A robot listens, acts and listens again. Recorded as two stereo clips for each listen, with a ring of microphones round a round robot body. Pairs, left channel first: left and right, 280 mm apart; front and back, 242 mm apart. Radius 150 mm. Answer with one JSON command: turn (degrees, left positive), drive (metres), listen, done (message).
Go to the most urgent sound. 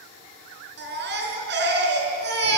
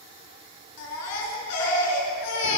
{"turn": -35}
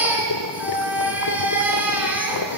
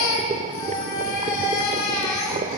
{"drive": 1.0}
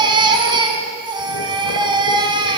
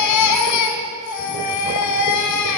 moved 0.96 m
{"turn": -15}
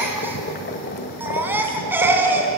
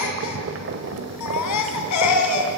{"drive": 1.0}
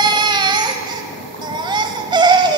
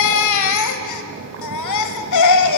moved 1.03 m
{"turn": -15}
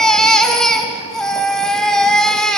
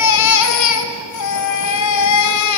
{"drive": 1.0}
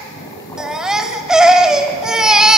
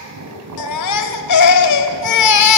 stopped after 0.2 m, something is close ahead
{"done": "Arrived at the baby crying, straight ahead."}